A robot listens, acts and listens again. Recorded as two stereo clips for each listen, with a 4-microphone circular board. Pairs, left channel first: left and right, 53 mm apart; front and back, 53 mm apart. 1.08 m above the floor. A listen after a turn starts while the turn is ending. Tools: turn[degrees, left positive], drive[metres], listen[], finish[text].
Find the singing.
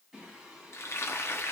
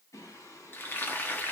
Action: finish[Found it: singing, straight ahead, over 4 m away.]